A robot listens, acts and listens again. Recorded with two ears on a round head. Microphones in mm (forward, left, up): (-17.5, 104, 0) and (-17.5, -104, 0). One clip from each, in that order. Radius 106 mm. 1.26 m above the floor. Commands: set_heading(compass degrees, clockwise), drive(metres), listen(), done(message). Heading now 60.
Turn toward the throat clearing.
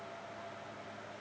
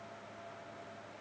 listen()
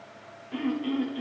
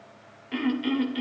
set_heading(125)
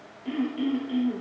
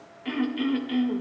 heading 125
set_heading(170)
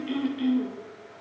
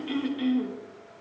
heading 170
done("Facing the throat clearing.")